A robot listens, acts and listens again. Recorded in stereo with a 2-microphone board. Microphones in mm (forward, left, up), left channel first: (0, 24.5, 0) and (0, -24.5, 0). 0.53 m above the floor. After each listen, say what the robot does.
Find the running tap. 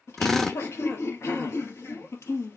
Keep listening.
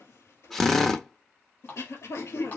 Turn 35° left.
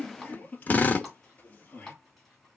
Found it: a running tap, straight ahead.